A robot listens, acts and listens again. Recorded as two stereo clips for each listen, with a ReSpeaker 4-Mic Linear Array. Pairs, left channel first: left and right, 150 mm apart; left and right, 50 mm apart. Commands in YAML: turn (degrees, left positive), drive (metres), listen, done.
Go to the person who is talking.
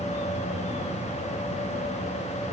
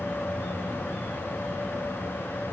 listen: true
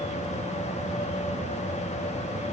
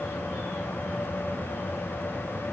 listen: true
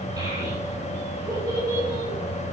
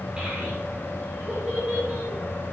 turn: -25
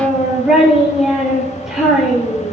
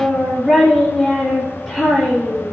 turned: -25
drive: 1.0
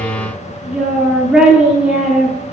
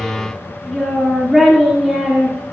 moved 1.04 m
drive: 1.0
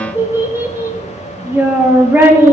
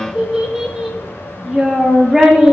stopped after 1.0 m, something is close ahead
turn: -20
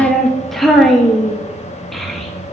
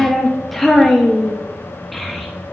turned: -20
done: "I am next to the child speaking."